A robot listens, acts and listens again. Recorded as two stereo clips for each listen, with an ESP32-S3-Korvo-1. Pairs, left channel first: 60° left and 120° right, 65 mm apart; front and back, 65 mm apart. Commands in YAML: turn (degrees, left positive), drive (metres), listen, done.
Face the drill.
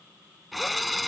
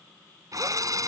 turn: 150
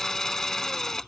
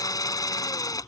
turn: -20
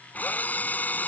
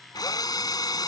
done: "Found it: a drill, straight ahead."